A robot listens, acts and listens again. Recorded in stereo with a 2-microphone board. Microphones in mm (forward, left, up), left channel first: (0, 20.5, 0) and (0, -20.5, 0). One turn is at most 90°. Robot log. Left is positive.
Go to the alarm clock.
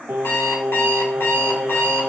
cmd yaw +90
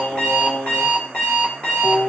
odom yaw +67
note: So it is at 30° left.
cmd yaw +30
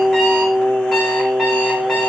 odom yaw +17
note: Nothing new. It was at 10° left.
cmd yaw +10
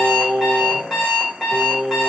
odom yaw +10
cmd fwd 1.0
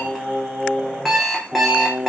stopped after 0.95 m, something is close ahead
end: I am next to the alarm clock.